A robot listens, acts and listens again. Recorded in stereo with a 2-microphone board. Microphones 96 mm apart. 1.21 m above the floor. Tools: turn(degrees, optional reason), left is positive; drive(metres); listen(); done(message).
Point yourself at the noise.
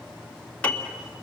turn(degrees=30)
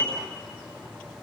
turn(degrees=130, reason="So it is at 130° left.")
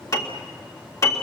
turn(degrees=35, reason="The piano is now 35° left.")
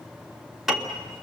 done("Found it: a piano, straight ahead, 1 to 2 m away.")